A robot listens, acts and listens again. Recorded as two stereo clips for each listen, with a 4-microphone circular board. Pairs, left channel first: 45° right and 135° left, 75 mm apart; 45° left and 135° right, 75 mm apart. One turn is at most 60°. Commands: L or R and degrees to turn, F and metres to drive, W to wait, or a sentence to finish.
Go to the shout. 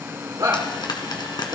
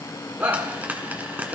L60
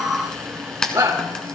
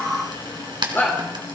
L60
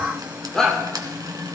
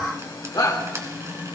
L40
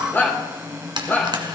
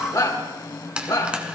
L15
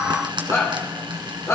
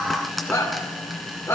F1.0
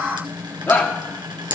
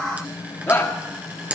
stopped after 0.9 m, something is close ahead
Arrived at the shout, straight ahead.